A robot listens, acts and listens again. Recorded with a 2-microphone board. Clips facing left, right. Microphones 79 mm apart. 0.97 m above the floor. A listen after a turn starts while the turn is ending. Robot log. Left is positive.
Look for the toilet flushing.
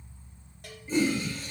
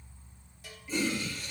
note: The toilet flushing: about 35° left or 145° left.
cmd yaw +35
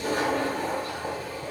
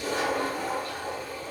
note: So it is at 105° left.
cmd yaw +105
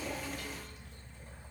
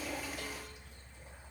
cmd idle
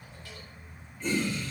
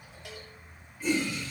note: The toilet flushing is now 10° right.
cmd yaw -10
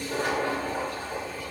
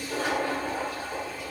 end: Found it: a toilet flushing, straight ahead.